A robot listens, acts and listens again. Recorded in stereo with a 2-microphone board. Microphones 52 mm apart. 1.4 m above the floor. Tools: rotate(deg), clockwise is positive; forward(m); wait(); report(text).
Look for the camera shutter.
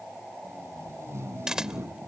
rotate(30)
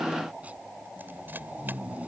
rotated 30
wait()
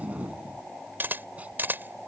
rotate(140)
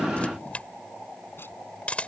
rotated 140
rotate(-25)
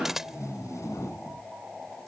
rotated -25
rotate(10)
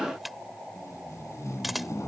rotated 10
report("Found it: a camera shutter, straight ahead.")